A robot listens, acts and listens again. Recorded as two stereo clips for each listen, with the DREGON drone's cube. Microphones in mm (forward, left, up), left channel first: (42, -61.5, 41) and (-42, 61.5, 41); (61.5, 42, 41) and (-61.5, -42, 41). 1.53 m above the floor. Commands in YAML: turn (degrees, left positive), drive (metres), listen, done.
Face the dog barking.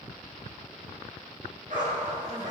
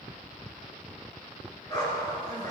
turn: 100
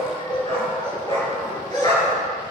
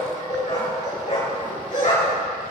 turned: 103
done: "Facing the dog barking."